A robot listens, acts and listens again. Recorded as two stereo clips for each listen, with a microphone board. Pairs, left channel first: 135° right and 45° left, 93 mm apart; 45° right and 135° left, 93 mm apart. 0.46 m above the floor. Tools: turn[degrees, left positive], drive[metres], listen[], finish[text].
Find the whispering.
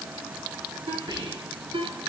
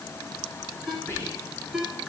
Thought: The whispering: 15° left.
Action: turn[15]
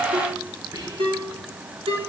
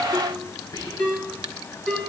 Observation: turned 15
Action: finish[Found it: whispering, straight ahead.]